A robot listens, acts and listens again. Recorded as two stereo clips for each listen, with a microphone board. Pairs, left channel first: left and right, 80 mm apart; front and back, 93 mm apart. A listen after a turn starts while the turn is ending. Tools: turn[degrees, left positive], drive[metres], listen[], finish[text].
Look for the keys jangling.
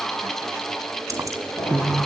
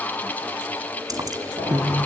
Thought: The keys jangling: 140° right.
Action: turn[-140]
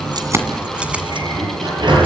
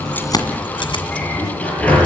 Action: listen[]
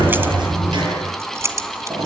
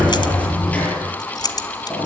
Thought: The keys jangling is now 40° right.
Action: turn[-40]
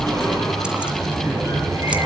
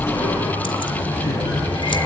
Action: listen[]
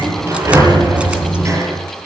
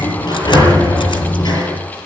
Action: listen[]
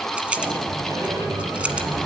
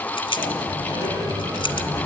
Thought: The keys jangling is now 15° right.
Action: turn[-15]
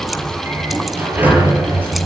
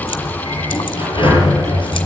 Action: listen[]
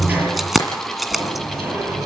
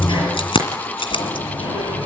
Action: finish[Facing the keys jangling.]